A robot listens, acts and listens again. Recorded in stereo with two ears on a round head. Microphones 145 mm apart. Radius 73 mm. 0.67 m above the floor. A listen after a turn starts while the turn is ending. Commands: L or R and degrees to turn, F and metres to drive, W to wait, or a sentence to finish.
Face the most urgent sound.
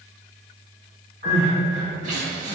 R45
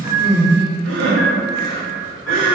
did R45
R85
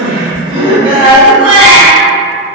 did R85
R30
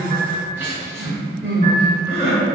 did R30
R15
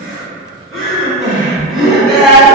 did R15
Found it: crying, straight ahead, under 1 m away.